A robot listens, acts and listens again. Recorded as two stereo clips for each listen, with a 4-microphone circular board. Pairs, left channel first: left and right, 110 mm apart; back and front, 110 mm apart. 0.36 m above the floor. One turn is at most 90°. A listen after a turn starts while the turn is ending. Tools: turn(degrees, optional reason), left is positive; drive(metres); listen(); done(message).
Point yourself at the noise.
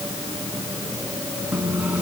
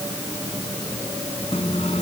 turn(degrees=-90, reason="The microwave: 165° right.")
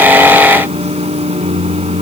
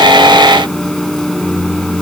turn(degrees=-90, reason="The microwave is now 95° right.")
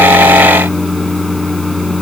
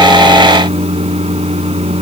done("Facing the microwave.")